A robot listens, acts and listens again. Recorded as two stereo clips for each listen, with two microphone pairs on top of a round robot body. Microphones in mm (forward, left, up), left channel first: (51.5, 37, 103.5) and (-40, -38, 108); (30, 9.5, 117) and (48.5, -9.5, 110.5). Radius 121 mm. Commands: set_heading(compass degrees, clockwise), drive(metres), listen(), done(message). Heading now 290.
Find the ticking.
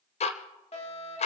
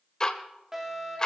set_heading(215)
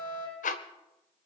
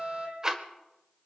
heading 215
set_heading(190)
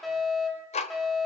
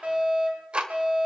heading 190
done("Facing the ticking.")